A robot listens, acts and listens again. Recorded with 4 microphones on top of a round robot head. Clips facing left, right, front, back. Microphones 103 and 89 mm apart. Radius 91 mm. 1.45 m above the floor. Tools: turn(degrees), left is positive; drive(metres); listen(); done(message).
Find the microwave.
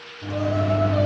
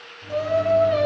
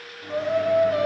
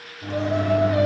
turn(degrees=120)
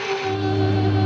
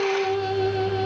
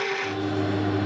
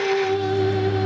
turn(degrees=40)
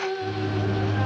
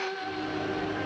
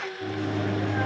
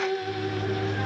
done("Facing the microwave, 2 to 4 m away.")